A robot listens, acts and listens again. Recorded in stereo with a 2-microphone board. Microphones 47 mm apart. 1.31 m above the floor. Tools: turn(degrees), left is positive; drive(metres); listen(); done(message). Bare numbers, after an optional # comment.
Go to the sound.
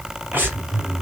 # The breathing: about 50° right or 130° right.
turn(-50)
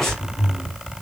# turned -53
drive(1.0)
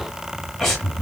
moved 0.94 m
drive(1.0)
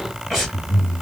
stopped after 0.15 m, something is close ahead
done("I am next to the breathing.")